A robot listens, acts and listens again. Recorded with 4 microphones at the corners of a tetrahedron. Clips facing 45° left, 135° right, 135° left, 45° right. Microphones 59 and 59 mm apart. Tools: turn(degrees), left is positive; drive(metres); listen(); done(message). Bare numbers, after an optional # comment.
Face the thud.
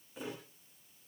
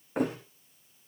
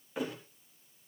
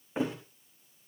# The thud: 105° right.
turn(-105)
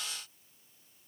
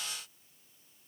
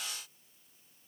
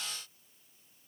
done("I heard a thud from this way, but can't make it out now.")